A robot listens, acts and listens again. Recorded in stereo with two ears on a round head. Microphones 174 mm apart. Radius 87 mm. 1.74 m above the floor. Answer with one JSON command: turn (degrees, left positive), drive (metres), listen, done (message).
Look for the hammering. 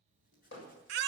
{"turn": 75}
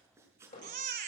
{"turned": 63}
{"turn": 45}
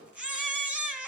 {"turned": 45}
{"done": "Found it: hammering, straight ahead."}